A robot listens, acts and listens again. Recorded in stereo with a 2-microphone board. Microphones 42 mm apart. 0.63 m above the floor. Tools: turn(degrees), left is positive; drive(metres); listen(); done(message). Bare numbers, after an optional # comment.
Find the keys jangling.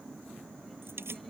# The keys jangling: about 70° right or 110° right.
turn(-70)
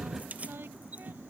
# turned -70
# So it is at 35° right.
turn(-35)
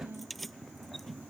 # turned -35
done("Facing the keys jangling.")